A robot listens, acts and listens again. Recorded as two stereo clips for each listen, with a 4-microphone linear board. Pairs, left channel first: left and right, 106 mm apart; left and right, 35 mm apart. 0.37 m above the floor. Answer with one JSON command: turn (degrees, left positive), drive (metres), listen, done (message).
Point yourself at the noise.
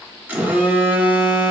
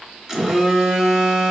{"turn": -15}
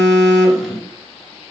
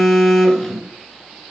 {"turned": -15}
{"done": "Found it: a phone buzzing, straight ahead."}